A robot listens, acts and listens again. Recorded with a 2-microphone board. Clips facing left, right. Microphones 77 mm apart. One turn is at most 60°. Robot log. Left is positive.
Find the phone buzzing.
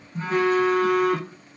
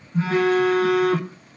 cmd yaw -60
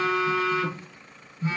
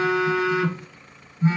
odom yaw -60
note: So it is at 35° right.
cmd yaw -35
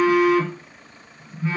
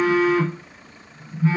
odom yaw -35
end: Facing the phone buzzing.